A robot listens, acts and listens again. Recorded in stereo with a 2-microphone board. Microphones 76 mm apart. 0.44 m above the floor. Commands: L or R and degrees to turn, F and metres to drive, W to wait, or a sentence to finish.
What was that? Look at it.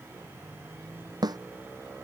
R60
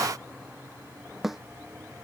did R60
Found it: a snare drum, straight ahead.